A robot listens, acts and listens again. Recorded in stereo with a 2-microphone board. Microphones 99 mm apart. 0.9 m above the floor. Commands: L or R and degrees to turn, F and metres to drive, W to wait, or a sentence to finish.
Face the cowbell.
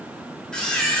W
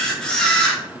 W
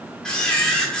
I can't make out a cowbell, only a camera shutter.